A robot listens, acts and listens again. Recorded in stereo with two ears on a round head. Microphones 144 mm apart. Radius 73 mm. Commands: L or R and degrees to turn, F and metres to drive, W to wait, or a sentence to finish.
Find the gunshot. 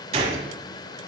R40
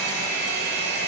W
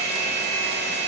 I heard a gunshot, but can't make it out now. It was about straight ahead or 100° right.